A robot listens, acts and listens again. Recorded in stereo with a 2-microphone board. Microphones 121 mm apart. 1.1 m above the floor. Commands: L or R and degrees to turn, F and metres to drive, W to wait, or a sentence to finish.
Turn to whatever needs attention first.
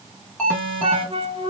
L30
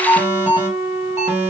R25
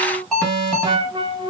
Found it: an alarm, straight ahead.